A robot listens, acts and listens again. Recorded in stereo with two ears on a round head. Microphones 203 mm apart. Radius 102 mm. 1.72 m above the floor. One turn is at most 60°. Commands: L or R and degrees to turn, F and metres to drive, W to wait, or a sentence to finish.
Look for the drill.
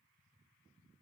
W
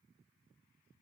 W
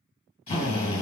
L30
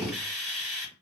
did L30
Found it: a drill, straight ahead, 1 to 2 m away.